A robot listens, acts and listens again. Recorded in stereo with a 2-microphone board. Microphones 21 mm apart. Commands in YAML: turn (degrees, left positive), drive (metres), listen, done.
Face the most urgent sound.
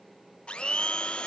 listen: true
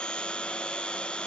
listen: true
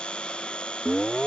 turn: 30
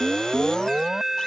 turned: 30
turn: -25
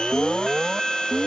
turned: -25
turn: -15
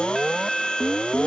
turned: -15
done: "Facing the alarm."